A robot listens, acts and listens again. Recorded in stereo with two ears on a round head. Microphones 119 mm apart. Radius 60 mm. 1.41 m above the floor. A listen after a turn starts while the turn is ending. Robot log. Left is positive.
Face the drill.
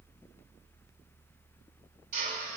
note: The drill: about 70° right or 110° right.
cmd yaw -70
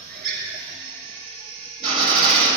note: So it is at 35° right.
cmd yaw -35
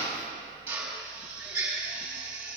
note: The drill is now 15° right.
cmd yaw -15
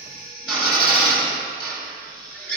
end: Facing the drill.